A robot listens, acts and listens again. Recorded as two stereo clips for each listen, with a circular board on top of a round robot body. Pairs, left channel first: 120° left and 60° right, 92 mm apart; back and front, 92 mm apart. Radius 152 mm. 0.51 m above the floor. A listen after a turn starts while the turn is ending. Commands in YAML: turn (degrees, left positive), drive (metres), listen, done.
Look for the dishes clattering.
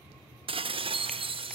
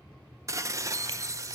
turn: -55
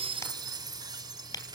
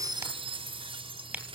turn: -15
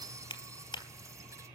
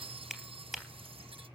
done: "Found it: dishes clattering, straight ahead, under 1 m away."